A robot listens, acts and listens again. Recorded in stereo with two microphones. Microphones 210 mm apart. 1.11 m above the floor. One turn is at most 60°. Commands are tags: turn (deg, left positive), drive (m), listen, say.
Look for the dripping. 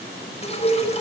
<turn deg="30"/>
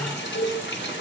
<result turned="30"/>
<turn deg="60"/>
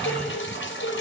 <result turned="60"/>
<turn deg="60"/>
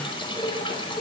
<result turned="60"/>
<turn deg="25"/>
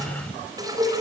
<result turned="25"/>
<turn deg="-20"/>
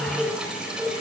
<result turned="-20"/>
<say>Found it: dripping, straight ahead.</say>